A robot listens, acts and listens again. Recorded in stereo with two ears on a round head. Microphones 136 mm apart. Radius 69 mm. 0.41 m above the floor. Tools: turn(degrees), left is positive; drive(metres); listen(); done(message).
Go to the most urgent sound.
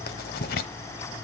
listen()
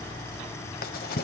listen()
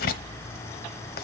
done("I can't make out anything urgent, only writing.")